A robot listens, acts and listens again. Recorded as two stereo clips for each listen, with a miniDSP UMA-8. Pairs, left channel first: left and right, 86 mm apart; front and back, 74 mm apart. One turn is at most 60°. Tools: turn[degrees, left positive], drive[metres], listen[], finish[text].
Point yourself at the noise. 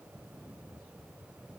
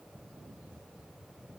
Action: listen[]
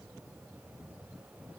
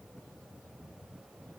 Action: listen[]
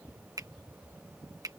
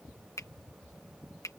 Thought: The finger snap: 45° right.
Action: turn[-45]
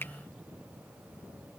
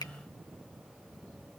Thought: The finger snap is now 25° left.
Action: turn[25]
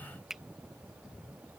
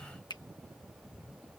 Action: finish[Facing the finger snap.]